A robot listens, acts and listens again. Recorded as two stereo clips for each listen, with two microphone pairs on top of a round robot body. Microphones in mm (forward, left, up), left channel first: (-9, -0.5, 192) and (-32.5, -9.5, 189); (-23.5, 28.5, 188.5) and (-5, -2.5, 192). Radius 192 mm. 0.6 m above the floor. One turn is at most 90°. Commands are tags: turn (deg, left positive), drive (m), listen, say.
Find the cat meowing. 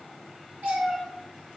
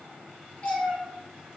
<turn deg="-90"/>
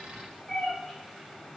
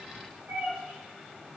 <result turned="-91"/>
<turn deg="-55"/>
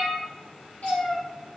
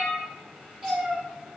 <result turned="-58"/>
<turn deg="20"/>
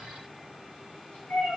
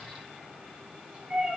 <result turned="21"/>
<turn deg="10"/>
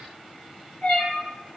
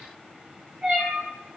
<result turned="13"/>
<say>Found it: a cat meowing, straight ahead.</say>